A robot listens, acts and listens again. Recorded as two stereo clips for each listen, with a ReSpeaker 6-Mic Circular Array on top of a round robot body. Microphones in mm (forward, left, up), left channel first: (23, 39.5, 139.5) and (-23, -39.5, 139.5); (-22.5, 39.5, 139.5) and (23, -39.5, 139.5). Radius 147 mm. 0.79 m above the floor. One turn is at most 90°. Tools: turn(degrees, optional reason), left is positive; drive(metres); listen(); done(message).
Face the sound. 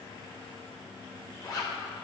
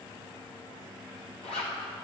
turn(degrees=90, reason="The zipper: 115° left.")
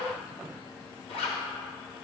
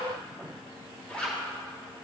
turn(degrees=40, reason="The zipper is now 40° left.")
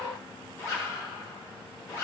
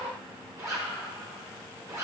done("Facing the zipper, 1 to 2 m away.")